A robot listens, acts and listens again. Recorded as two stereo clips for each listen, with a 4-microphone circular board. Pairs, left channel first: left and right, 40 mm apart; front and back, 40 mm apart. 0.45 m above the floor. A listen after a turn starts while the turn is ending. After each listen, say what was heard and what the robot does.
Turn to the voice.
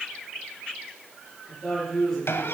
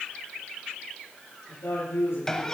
The woman speaking: 10° left. Turn 10° left.
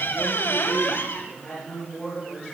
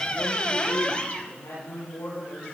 Found it: a woman speaking, straight ahead, over 4 m away.